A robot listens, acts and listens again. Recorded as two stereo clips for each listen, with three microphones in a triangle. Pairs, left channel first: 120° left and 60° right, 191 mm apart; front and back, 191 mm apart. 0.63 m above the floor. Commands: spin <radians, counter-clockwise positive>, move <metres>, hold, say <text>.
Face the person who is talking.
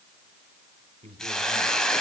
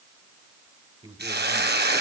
spin -2.09
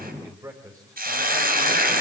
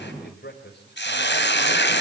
spin 0.26
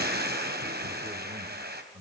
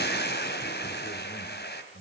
say Found it: a man speaking, straight ahead.